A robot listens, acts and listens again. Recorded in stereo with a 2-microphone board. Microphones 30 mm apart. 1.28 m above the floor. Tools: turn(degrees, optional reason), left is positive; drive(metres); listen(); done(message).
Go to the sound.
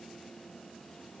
listen()
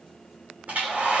turn(degrees=-60, reason="The hair dryer: about 60° right or 120° right.")
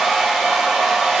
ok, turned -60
drive(metres=1.0)
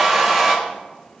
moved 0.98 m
drive(metres=1.0)
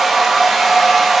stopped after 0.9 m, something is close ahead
done("Arrived at the hair dryer, straight ahead.")